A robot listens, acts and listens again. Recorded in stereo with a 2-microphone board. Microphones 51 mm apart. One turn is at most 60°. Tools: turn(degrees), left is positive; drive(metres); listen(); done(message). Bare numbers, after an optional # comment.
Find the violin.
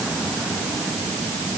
listen()
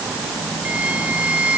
# The violin: about 25° right or 155° right.
turn(-25)
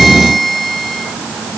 done("Facing the violin.")